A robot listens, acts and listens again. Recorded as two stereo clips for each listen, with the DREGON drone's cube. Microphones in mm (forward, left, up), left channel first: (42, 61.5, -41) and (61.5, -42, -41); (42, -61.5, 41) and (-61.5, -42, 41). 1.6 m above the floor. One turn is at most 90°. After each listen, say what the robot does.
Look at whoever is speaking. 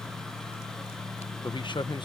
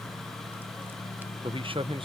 Turn 90° left.
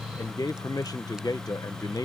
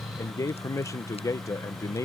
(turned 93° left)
Turn 45° left.
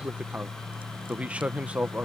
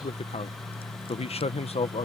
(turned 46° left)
Facing the man speaking.